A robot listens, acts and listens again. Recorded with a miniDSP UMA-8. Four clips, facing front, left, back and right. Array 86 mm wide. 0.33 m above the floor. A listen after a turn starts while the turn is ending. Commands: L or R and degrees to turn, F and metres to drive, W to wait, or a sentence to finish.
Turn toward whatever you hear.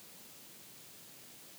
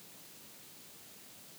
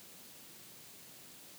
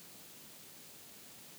W
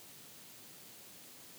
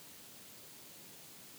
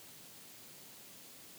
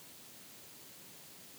W
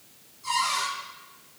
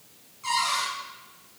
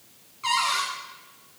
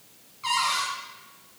R160
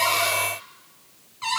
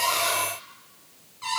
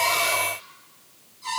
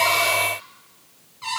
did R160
Found it: a cupboard door, straight ahead, over 4 m away.